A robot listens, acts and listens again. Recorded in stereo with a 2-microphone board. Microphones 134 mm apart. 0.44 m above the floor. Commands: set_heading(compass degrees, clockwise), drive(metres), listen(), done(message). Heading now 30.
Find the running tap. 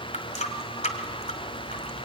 set_heading(330)
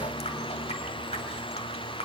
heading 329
listen()
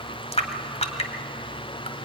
set_heading(274)
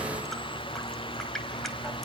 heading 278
listen()
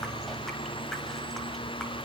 listen()
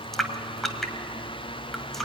done("Found it: a running tap, straight ahead, 1 to 2 m away.")